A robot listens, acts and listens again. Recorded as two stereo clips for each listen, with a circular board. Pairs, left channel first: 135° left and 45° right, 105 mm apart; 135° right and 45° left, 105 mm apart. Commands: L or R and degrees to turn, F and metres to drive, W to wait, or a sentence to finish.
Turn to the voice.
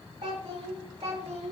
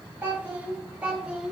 R40
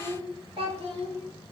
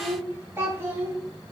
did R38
R25
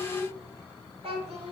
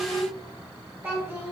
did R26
R30
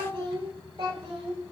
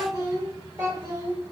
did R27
R15
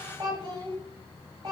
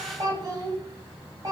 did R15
Facing the child speaking.